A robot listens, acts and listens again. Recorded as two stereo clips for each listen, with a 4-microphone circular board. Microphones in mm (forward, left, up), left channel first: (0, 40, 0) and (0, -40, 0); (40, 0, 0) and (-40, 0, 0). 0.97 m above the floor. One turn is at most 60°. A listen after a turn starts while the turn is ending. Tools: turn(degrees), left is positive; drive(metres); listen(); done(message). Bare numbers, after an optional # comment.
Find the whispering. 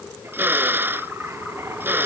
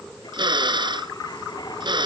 listen()
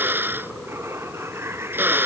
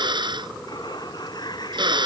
listen()
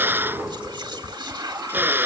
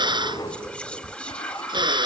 # The whispering: 75° right.
turn(-60)
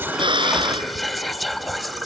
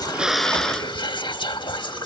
done("Found it: whispering, straight ahead.")